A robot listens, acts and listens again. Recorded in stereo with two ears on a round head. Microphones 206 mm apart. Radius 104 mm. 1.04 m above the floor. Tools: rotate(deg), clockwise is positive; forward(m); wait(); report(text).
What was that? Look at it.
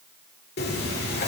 rotate(-45)
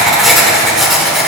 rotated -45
report("Found it: writing, straight ahead.")